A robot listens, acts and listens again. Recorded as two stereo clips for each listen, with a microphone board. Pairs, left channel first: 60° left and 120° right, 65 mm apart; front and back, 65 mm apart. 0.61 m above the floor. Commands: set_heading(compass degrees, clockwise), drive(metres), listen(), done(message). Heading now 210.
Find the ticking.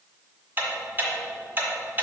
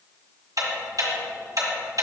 set_heading(25)
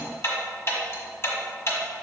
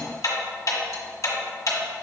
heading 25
set_heading(5)
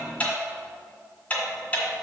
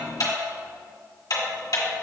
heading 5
done("Facing the ticking.")